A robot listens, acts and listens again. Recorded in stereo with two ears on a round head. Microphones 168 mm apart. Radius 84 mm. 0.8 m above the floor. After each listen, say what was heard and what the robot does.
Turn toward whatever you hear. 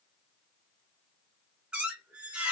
Turn 30° right.
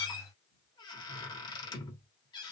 So it is at 25° left. Turn 25° left.
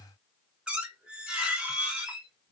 Facing the squeak, 1 to 2 m away.